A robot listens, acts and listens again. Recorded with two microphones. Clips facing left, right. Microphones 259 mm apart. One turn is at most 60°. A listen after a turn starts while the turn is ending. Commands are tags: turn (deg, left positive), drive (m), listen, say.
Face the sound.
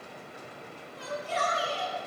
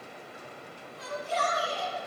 <turn deg="60"/>
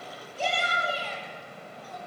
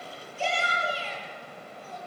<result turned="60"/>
<turn deg="45"/>
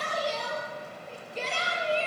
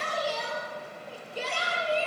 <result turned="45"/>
<turn deg="-10"/>
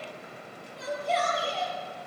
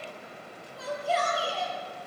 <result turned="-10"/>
<say>Found it: a shout, straight ahead, over 4 m away.</say>